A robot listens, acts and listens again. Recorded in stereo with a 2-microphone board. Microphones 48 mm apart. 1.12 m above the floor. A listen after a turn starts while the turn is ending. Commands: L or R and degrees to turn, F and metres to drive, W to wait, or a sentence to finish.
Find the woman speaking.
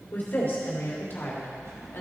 L50
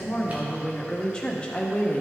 L30
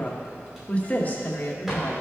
L50
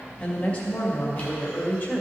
L35
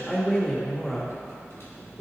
Found it: a woman speaking, straight ahead.